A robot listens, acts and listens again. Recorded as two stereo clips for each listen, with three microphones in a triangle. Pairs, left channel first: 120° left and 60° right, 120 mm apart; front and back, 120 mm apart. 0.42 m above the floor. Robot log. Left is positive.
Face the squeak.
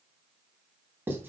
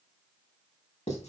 cmd idle
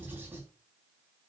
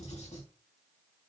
cmd idle
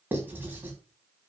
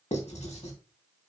end: I can't make out a squeak, only writing.